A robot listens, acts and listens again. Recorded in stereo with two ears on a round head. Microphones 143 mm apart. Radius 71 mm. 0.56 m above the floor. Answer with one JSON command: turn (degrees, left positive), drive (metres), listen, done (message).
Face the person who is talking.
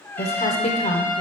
{"turn": 40}
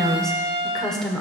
{"done": "Found it: a woman speaking, straight ahead, 1 to 2 m away."}